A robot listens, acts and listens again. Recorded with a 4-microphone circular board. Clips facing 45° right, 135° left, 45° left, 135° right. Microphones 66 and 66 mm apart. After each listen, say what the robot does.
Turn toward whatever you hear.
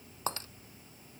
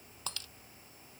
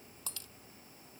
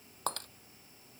Turn 100° right.
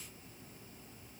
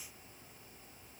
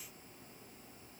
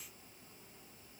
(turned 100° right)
I heard breaking glass from this way, but can't make it out now.